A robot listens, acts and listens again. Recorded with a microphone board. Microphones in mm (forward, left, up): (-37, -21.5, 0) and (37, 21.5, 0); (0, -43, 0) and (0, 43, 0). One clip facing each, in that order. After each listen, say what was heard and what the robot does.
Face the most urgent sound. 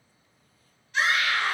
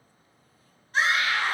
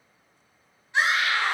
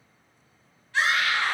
The scream: 20° right. Turn 20° right.
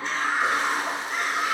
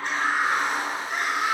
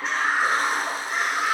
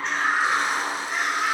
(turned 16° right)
Facing the scream.